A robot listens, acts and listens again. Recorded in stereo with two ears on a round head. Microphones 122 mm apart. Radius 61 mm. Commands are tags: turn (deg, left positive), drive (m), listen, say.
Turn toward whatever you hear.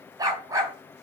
<turn deg="-25"/>
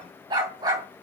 <turn deg="-30"/>
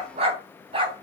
<turn deg="-140"/>
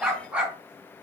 <turn deg="-10"/>
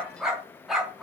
<say>Found it: a dog barking, straight ahead.</say>